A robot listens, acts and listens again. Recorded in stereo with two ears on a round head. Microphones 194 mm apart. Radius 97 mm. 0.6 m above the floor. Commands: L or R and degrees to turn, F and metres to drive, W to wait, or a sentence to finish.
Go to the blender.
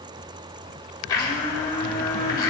L20
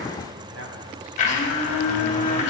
L140
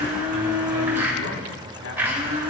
R10
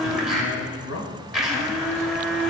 F1.0
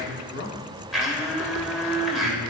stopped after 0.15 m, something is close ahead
Blocked. The blender is further on, straight ahead.